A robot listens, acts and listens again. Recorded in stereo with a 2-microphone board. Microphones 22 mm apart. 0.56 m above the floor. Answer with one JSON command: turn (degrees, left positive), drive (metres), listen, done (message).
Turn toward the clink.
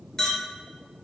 {"turn": 25}
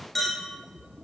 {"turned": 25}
{"done": "Found it: a clink, straight ahead."}